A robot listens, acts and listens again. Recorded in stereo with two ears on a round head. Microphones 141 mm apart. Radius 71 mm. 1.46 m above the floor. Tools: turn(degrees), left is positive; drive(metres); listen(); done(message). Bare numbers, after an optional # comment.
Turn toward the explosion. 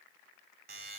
listen()
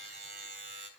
listen()
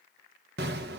# The explosion: about 65° right or 115° right.
turn(-65)
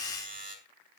listen()
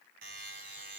done("I heard an explosion, but can't make it out now. It was about straight ahead or 50° right.")